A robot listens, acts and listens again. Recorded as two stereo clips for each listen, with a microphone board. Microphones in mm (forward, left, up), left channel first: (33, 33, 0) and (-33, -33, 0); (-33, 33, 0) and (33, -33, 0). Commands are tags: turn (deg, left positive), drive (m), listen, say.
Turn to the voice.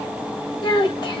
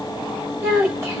<turn deg="15"/>
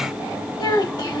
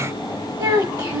<say>Found it: a child speaking, straight ahead.</say>